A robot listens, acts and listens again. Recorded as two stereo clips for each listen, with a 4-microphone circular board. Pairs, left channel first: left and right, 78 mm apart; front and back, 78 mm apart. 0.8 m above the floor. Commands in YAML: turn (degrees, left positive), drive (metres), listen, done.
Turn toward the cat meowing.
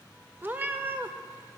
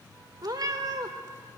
turn: -150
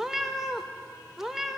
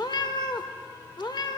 done: "Found it: a cat meowing, straight ahead."